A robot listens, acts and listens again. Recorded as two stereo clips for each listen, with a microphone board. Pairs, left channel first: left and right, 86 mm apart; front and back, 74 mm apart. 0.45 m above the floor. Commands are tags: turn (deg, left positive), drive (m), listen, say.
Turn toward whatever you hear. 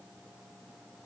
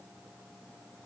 <listen/>
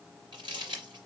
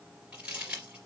<turn deg="-105"/>
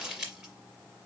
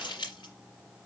<turn deg="-10"/>
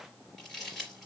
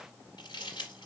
<say>Found it: crumpling, straight ahead.</say>